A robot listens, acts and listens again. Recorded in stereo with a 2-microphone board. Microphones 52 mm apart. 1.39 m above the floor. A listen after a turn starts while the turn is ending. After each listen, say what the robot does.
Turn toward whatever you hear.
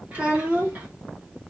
Turn 30° right.
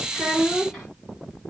Found it: a child speaking, straight ahead, 1 to 2 m away.